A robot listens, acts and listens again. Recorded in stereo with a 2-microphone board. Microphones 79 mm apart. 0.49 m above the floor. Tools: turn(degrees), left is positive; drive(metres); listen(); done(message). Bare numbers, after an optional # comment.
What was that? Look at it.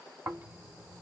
# The snoring: about 25° right or 155° right.
turn(-25)
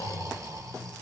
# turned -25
# So it is at 125° right.
turn(-125)
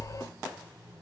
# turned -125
# The snoring is now 30° right.
turn(-30)
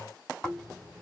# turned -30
# The snoring is now 10° left.
turn(10)
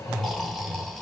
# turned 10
done("Found it: snoring, straight ahead, 1 to 2 m away.")